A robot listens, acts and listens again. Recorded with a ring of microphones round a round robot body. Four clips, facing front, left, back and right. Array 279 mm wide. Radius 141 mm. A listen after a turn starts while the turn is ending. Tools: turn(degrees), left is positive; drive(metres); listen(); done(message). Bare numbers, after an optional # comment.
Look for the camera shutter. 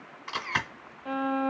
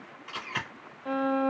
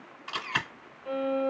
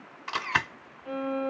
# The camera shutter: 80° right.
turn(-80)
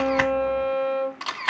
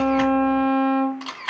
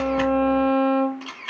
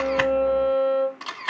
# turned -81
done("Facing the camera shutter, 1 to 2 m away.")